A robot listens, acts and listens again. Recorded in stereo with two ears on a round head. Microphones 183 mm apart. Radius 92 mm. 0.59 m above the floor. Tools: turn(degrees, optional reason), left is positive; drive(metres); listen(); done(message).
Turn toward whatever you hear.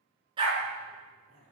turn(degrees=-25, reason="The dog barking: about 25° right or 155° right.")
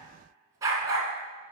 turn(degrees=-20, reason="The dog barking: about 20° right or 160° right.")
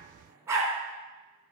turn(degrees=-15, reason="The dog barking: about 15° right or 165° right.")
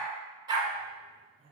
turn(degrees=-20, reason="The dog barking: about 20° right or 160° right.")
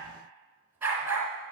turn(degrees=-30)
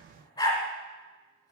turn(degrees=20, reason="So it is at 20° left.")
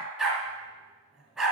done("Found it: a dog barking, straight ahead, 1 to 2 m away.")